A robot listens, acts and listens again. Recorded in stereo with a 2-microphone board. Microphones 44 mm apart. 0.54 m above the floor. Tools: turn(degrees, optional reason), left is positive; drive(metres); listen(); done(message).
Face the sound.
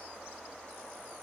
listen()
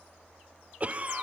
turn(degrees=-30, reason="The cough: about 30° right or 150° right.")
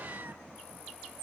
listen()
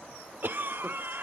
turn(degrees=-110, reason="So it is at 110° right.")
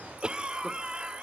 turn(degrees=-30, reason="The cough is now 30° right.")
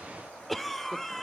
done("Facing the cough, 1 to 2 m away.")